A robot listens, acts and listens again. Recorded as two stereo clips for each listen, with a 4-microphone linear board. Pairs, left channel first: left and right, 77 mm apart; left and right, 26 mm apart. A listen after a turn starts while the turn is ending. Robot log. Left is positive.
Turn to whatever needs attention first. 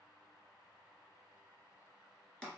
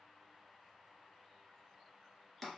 cmd idle
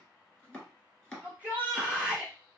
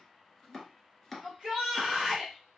note: The shout: about 20° right or 160° right.
cmd yaw -20
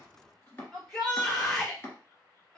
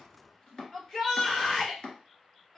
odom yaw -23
end: Found it: a shout, straight ahead, 1 to 2 m away.